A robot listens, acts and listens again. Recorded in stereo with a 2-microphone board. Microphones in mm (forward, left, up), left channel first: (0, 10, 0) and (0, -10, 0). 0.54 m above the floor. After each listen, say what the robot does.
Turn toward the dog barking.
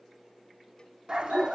Turn 55° right.
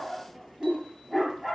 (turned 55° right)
Facing the dog barking.